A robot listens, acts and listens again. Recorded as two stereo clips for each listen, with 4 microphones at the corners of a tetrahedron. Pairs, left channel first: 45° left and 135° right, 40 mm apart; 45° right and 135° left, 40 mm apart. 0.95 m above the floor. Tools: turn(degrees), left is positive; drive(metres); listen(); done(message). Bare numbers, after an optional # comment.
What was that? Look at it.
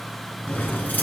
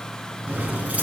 # The keys jangling: 80° left.
turn(80)
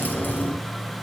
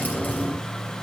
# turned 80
done("Facing the keys jangling, over 4 m away.")